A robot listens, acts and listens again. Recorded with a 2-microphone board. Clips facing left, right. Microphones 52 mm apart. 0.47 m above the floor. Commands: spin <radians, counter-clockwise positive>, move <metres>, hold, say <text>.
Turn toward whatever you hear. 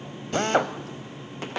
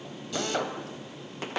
spin 0.70
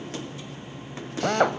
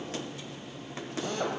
spin 1.66
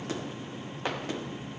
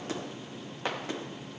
hold
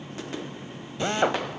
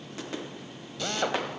spin 0.52
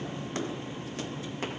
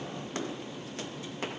hold
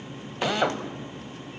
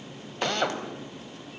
spin 0.17
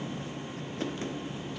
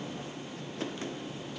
hold
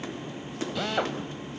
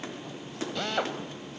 say Found it: a drill, straight ahead, 1 to 2 m away.